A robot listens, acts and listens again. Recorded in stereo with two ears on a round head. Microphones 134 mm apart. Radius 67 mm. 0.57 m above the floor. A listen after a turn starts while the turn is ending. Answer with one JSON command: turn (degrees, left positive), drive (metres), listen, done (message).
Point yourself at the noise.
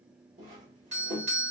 {"turn": -55}
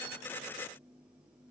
{"listen": true}
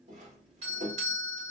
{"turn": -50}
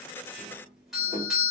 {"done": "Found it: a doorbell, straight ahead, 1 to 2 m away."}